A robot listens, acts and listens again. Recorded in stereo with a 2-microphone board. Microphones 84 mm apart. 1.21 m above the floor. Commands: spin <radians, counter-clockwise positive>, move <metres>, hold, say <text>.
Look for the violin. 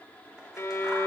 spin 0.61
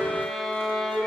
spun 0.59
say Found it: a violin, straight ahead, 1 to 2 m away.